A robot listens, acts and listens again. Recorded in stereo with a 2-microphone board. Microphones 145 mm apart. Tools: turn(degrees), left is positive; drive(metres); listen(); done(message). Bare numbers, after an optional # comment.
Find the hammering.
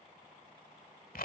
listen()
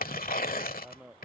turn(-30)
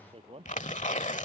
# So it is at 145° right.
turn(-145)
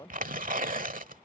# The hammering is now 25° left.
turn(25)
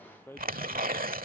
# The hammering is now 15° left.
turn(15)
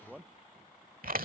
done("Found it: hammering, straight ahead.")